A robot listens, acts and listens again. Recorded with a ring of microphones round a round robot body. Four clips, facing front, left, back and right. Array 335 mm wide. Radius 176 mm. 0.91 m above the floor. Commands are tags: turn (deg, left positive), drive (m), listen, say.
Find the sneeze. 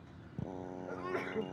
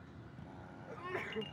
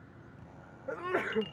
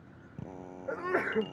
<turn deg="-120"/>
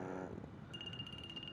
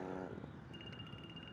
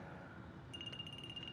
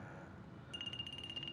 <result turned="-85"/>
<turn deg="-35"/>
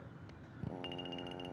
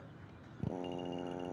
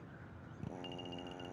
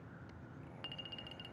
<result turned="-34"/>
<say>Facing where the sneeze came from. I can't hear it now.</say>